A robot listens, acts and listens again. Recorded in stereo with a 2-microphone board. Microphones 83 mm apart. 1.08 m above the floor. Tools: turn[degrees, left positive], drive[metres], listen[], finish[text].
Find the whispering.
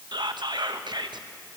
Thought: The whispering: about 60° right or 120° right.
Action: turn[-60]
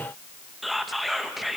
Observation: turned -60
Action: finish[Found it: whispering, straight ahead.]